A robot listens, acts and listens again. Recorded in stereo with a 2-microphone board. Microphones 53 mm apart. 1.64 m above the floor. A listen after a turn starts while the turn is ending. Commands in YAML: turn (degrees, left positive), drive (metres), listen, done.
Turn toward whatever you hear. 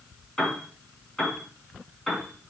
turn: 30
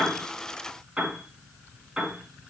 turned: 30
turn: -20
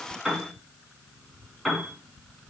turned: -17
done: "Facing the piano, 2 to 4 m away."